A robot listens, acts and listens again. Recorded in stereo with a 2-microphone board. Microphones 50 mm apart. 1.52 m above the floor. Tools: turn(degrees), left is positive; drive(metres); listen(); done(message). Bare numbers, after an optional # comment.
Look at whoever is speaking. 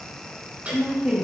# The woman speaking: about 20° right or 160° right.
turn(-20)
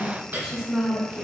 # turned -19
# The woman speaking: about 20° right or 160° right.
turn(-20)
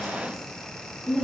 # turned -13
# The woman speaking: about 20° right or 160° right.
turn(-20)
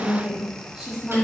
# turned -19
turn(-30)
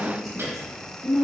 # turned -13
turn(-30)
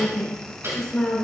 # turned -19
# So it is at 15° left.
turn(15)
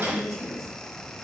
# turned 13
done("Found it: a woman speaking, straight ahead, 2 to 4 m away.")